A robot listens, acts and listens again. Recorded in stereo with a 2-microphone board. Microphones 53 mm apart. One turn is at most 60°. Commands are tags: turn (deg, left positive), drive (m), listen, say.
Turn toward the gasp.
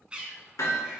<listen/>
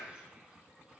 <listen/>
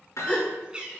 <turn deg="20"/>
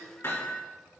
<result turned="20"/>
<listen/>
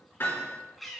<say>I heard a gasp, but can't make it out now. It was about straight ahead or 140° left.</say>